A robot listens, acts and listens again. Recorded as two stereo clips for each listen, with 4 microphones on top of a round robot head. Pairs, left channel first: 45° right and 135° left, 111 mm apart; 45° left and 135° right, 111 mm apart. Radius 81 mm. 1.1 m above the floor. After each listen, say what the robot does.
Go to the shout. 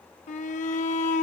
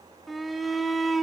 Turn 45° right.
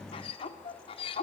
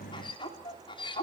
Drive 1.0 m forward.
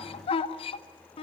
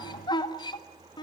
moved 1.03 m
Drive 1.0 m forward.
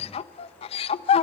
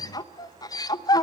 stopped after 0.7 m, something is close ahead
Turn 10° right.
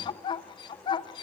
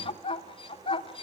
I am next to the shout.